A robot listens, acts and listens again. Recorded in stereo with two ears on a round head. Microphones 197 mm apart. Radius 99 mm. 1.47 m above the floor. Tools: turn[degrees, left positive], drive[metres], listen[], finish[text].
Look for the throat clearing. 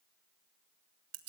Action: listen[]
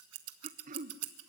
Thought: The throat clearing: about 35° right or 145° right.
Action: turn[-35]
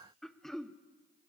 Action: finish[Facing the throat clearing, under 1 m away.]